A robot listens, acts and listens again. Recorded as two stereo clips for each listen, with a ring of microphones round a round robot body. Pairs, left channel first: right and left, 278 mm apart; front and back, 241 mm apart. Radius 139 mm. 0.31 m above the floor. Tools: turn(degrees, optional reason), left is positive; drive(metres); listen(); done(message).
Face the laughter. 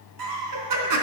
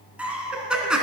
turn(degrees=95, reason="The laughter: 95° left.")
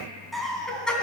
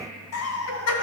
done("Found it: laughter, straight ahead, 2 to 4 m away.")